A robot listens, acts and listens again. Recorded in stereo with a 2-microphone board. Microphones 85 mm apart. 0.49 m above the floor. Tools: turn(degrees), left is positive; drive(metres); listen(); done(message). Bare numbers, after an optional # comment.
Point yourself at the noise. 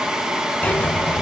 # The zipper: about 15° left or 165° left.
turn(15)
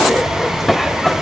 done("Facing the zipper.")